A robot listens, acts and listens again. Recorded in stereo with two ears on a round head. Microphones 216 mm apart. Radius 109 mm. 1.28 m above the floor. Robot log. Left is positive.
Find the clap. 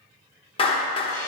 note: The clap: about 20° left or 160° left.
cmd yaw +20
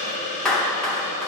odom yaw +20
end: Found it: a clap, straight ahead, under 1 m away.